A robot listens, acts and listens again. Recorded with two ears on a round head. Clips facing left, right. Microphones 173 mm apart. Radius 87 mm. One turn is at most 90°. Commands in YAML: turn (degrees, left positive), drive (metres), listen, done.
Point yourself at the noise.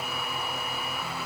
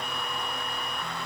listen: true
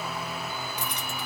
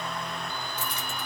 turn: 20
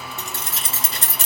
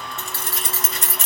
turn: 35
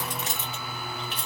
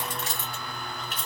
turn: 30
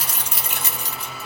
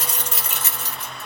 turn: 30
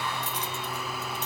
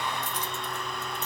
listen: true
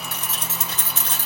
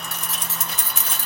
turn: -10
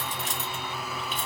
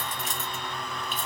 done: "Found it: keys jangling, straight ahead, 1 to 2 m away."